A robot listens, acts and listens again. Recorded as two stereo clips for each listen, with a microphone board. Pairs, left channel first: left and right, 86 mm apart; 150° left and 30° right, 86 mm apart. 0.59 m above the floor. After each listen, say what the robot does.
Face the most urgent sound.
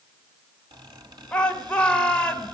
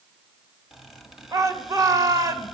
Turn 15° left.
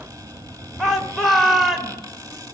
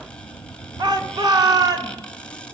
Facing the shout.